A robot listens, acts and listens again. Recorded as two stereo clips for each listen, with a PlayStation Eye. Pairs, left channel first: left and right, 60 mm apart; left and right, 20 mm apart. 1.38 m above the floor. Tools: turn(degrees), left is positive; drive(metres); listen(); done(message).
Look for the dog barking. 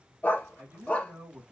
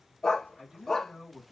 turn(degrees=25)
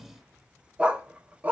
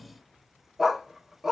turn(degrees=-30)
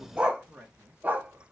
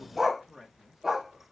turn(degrees=-30)
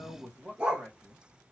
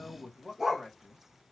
turn(degrees=-15)
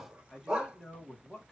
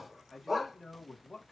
turn(degrees=-10)
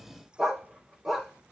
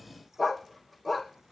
done("Facing the dog barking, 2 to 4 m away.")